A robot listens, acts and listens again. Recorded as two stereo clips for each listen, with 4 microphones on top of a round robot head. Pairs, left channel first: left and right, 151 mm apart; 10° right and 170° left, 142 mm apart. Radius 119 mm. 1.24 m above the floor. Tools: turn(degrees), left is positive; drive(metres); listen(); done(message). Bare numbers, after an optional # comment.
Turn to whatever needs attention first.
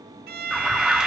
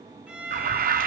# The alarm: 175° right.
turn(-175)
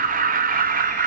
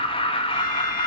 # The alarm is now 60° right.
turn(-60)
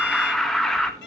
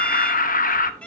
done("Facing the alarm, 1 to 2 m away.")